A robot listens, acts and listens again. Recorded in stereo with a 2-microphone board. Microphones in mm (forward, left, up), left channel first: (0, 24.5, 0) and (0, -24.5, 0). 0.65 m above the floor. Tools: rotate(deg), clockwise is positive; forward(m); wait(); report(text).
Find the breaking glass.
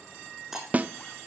rotate(30)
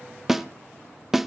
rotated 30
wait()
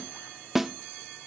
report("I heard breaking glass, but can't make it out now. It was about 25° left or 145° right.")